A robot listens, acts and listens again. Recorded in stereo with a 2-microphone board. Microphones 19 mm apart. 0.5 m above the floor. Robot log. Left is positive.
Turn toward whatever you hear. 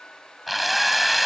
cmd yaw +30
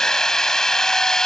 note: So it is at 150° left.
cmd yaw +150
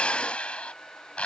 note: The drill is now 65° left.
cmd yaw +65
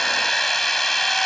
note: The drill is now 10° left.
cmd yaw +10
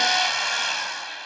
end: Found it: a drill, straight ahead.